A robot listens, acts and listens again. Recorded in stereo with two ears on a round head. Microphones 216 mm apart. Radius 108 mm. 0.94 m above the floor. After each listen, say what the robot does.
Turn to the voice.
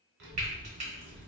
Turn 45° right.
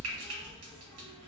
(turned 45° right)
Facing the child speaking, 1 to 2 m away.